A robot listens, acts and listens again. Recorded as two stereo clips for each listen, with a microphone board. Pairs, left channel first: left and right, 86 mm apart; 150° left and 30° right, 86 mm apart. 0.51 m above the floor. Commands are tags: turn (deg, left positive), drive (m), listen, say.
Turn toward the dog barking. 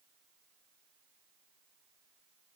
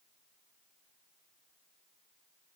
<listen/>
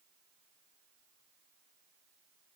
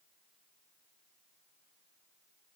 <listen/>
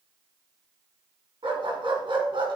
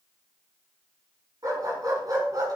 <turn deg="-75"/>
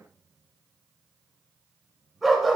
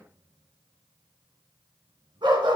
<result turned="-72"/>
<say>Found it: a dog barking, straight ahead, 2 to 4 m away.</say>